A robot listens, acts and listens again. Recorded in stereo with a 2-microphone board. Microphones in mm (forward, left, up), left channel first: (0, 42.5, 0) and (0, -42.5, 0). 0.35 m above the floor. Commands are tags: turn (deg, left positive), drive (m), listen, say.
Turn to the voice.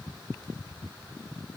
<listen/>
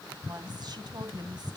<turn deg="-55"/>
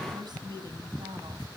<turn deg="-65"/>
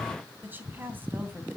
<turn deg="-25"/>
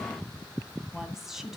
<say>Facing the woman speaking, 2 to 4 m away.</say>